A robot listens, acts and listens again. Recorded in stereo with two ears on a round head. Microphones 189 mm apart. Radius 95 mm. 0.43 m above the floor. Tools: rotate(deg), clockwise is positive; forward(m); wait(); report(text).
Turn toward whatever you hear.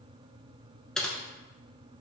rotate(-30)
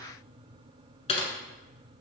rotate(-150)
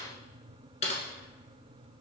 rotate(-35)
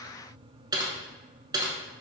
rotate(20)
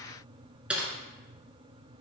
report("Facing the typing on a keyboard.")